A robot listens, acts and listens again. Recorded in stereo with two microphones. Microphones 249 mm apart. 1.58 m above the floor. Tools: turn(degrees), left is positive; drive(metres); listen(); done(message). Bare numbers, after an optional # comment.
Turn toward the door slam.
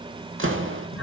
# The door slam: about 60° right or 120° right.
turn(-60)
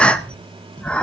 listen()
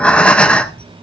done("I heard a door slam, but can't make it out now. It was about straight ahead or 60° right.")